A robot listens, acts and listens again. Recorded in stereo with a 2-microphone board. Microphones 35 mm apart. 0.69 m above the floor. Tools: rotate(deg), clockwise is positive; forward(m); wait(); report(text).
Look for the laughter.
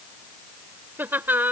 rotate(75)
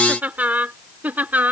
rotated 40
rotate(60)
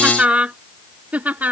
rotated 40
rotate(55)
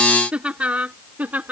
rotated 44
rotate(55)
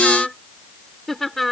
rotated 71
report("Facing the laughter.")